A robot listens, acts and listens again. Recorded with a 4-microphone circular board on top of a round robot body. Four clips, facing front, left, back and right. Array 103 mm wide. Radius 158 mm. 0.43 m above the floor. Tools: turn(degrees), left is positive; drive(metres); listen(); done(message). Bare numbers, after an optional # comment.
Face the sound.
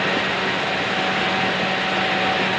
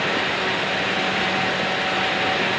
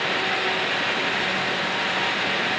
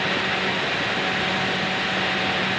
listen()
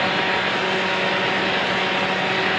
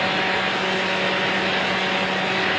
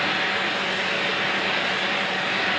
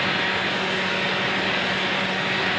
listen()
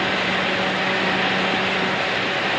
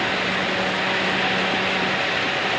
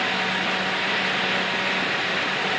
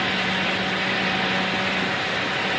done("I can't make out anything to turn to.")